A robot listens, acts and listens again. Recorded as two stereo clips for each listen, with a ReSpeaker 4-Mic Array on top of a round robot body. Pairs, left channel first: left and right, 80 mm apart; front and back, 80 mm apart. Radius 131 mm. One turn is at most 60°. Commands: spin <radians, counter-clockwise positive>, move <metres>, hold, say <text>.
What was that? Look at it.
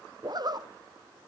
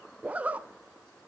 spin -1.05
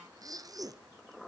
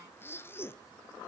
spin -0.96
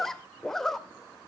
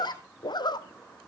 say Found it: a zipper, straight ahead.